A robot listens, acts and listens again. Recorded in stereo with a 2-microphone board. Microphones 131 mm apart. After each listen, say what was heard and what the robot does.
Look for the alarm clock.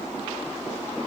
Keep listening.
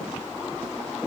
Keep listening.
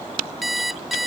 Turn 30° left.
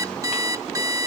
So it is at 30° right. Turn 30° right.
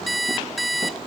Facing the alarm clock.